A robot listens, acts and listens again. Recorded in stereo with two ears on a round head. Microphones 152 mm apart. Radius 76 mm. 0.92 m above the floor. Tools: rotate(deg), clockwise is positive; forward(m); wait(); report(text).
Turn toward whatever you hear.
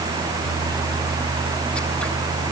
wait()
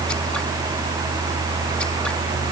wait()
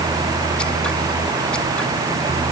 report("I can't make out anything to turn to.")